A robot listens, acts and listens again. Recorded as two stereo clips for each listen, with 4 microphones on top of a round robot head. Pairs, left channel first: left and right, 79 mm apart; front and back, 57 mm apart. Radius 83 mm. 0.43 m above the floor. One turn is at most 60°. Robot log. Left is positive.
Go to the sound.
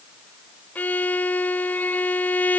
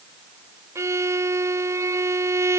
note: The violin: 160° left.
cmd yaw +60
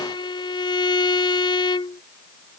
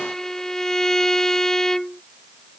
note: The violin is now 80° left.
cmd yaw +60
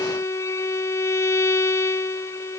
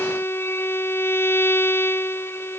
note: The violin is now 40° left.
cmd yaw +40
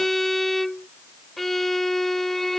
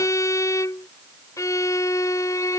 cmd fwd 1.0
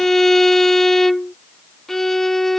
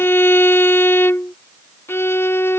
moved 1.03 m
cmd fwd 1.0
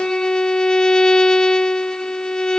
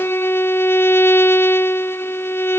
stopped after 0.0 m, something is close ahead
note: The violin is now 15° left.
cmd yaw +15
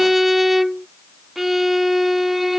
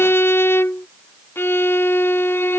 end: Arrived at the violin, straight ahead.